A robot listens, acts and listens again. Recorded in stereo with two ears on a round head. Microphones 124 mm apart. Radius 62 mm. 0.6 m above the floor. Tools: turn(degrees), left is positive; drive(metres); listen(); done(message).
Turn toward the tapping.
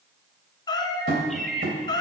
turn(degrees=-70)
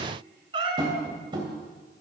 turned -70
turn(degrees=-35)
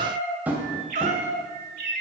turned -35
turn(degrees=-10)
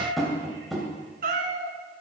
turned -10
done("Found it: tapping, straight ahead.")